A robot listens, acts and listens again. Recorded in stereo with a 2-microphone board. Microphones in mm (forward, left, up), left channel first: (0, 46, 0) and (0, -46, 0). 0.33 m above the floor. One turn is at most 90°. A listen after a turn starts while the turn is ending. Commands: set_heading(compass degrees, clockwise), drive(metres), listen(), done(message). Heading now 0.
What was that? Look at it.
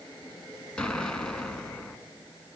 set_heading(330)
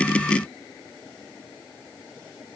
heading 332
listen()
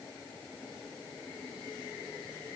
done("I heard an explosion, but can't make it out now. It was about 20° right or 145° left.")